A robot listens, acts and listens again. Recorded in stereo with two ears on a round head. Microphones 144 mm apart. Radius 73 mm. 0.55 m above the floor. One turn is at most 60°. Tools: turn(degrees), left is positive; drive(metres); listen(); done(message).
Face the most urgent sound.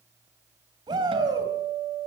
turn(degrees=-25)
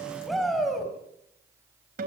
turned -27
done("Facing the shout, over 4 m away.")